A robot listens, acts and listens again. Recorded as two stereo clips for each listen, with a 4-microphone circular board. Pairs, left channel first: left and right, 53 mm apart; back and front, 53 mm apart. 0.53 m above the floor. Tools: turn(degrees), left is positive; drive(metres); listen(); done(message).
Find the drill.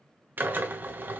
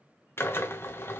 turn(degrees=-140)
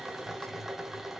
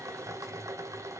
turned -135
done("Facing the drill.")